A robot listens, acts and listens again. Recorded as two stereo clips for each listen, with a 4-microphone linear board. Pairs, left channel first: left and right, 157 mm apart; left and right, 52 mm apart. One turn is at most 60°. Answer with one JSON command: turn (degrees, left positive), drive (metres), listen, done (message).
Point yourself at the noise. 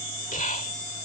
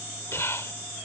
{"turn": 55}
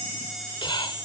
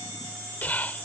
{"turn": 40}
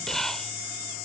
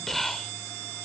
{"done": "Facing the whispering."}